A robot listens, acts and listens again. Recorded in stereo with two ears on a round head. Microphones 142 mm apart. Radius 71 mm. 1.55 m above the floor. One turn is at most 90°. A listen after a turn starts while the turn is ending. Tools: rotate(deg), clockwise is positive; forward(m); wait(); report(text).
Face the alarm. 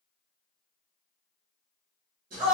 wait()
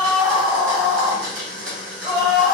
wait()
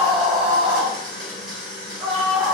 report("I can't make out an alarm, only a scream and a blender.")